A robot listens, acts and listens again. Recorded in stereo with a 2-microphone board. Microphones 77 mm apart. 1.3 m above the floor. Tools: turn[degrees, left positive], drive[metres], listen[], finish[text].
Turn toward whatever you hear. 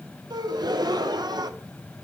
Thought: The gasp: about 70° right or 110° right.
Action: turn[-70]
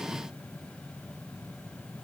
Action: listen[]
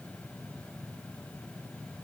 Action: finish[I heard a gasp, but can't make it out now. It was about straight ahead or 40° right.]